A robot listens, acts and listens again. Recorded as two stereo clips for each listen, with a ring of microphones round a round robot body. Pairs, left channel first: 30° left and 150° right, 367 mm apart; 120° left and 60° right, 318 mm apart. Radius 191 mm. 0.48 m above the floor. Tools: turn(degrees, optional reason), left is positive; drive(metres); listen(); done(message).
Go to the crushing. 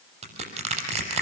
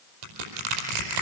turn(degrees=-75, reason="The crushing: 75° right.")
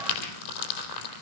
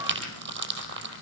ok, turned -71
drive(metres=1.0)
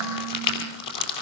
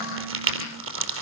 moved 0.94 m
turn(degrees=-10, reason="The crushing is now 10° right.")
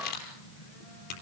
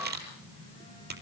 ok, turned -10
drive(metres=1.0)
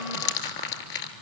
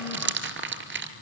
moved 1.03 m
drive(metres=1.0)
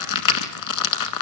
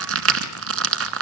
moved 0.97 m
turn(degrees=-10, reason="The crushing is now 10° right.")
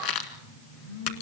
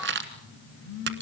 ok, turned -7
drive(metres=1.0)
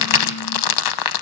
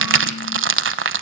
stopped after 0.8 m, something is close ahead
done("Arrived at the crushing, straight ahead.")